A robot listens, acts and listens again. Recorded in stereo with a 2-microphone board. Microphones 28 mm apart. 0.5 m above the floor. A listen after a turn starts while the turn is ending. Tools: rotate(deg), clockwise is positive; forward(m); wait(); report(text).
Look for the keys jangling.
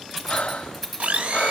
rotate(-30)
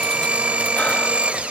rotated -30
wait()
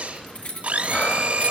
rotate(-125)
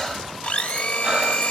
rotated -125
wait()
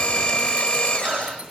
rotate(20)
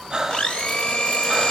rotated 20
wait()
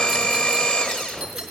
wait()
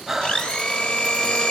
report("I heard keys jangling from this way, but can't make it out now.")